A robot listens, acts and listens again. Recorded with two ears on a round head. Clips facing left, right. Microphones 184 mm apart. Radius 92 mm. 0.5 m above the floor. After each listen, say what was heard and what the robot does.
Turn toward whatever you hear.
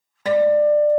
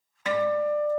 The guitar: about 30° left or 150° left. Turn 30° left.
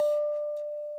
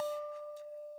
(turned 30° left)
Facing the guitar, under 1 m away.